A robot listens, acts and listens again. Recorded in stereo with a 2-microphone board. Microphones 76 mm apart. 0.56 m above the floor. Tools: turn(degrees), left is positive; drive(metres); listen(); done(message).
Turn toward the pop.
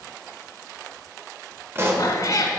turn(degrees=-35)
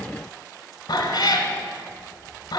listen()
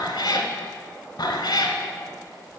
done("I heard a pop, but can't make it out now. It was about straight ahead or 110° right.")